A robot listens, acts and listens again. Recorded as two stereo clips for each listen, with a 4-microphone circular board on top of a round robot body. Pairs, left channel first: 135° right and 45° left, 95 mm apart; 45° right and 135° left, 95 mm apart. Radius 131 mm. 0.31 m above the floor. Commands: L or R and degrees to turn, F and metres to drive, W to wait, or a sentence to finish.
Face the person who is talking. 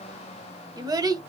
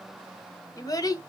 Found it: a child speaking, straight ahead.